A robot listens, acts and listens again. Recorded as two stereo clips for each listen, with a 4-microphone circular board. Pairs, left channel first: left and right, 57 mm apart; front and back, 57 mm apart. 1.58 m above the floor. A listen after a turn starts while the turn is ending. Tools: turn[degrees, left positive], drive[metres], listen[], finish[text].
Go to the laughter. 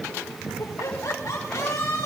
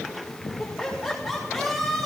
Thought: The laughter: 90° left.
Action: turn[90]
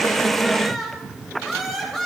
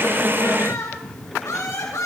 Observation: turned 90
Action: drive[1.0]
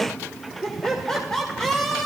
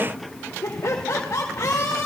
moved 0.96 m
Thought: The laughter is now 10° left.
Action: turn[10]
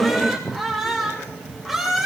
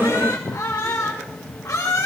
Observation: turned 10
Action: drive[1.0]
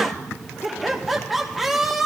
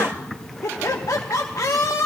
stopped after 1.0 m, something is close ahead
Action: finish[I am next to the laughter.]